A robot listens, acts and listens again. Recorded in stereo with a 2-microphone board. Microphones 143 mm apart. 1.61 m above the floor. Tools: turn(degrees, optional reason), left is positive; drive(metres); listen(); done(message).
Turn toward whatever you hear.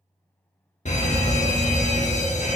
turn(degrees=55, reason="The fire alarm: about 55° left or 125° left.")
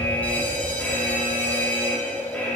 turn(degrees=15, reason="So it is at 15° left.")
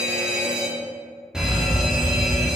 done("Found it: a fire alarm, straight ahead.")